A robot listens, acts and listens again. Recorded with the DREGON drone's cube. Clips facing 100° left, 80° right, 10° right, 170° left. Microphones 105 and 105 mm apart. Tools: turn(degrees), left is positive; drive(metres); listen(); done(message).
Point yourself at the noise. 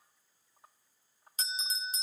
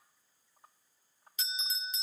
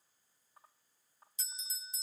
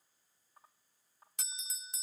turn(degrees=150)
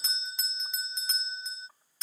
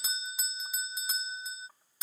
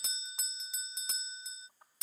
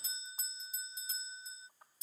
done("Facing the bell.")